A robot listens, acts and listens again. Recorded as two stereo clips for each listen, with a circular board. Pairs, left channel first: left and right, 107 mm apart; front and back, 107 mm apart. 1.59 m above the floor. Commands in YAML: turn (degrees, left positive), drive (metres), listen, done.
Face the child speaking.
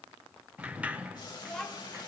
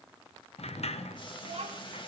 turn: 175
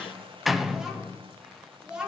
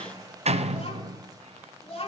turn: -10
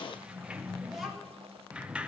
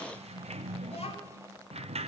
listen: true
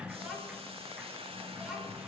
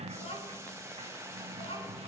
done: "Facing the child speaking, over 4 m away."